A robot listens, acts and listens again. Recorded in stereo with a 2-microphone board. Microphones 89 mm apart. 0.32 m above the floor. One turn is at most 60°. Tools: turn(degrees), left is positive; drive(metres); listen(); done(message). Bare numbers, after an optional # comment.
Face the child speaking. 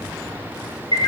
listen()
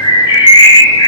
listen()
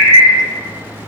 done("I can't make out a child speaking to turn to.")